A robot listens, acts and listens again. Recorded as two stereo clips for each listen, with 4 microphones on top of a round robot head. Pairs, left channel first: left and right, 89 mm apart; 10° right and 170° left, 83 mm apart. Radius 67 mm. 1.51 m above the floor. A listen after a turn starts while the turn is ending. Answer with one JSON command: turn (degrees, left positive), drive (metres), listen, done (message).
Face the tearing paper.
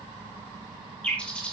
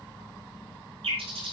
{"listen": true}
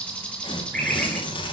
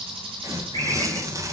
{"turn": 120}
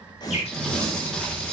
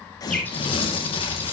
{"done": "Found it: tearing paper, straight ahead."}